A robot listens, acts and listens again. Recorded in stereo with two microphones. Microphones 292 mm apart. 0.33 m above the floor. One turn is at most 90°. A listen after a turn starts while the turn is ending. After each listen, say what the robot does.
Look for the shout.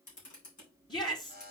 Turn 15° left.
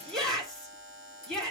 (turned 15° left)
Facing the shout, 2 to 4 m away.